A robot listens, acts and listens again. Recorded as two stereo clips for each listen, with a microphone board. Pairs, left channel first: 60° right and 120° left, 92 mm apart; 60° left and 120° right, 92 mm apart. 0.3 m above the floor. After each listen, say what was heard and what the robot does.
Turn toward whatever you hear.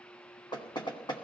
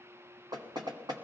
The knocking: 85° right. Turn 85° right.
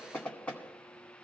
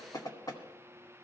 The knocking is now 20° left. Turn 20° left.
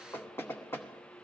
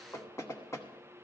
Found it: knocking, straight ahead, 1 to 2 m away.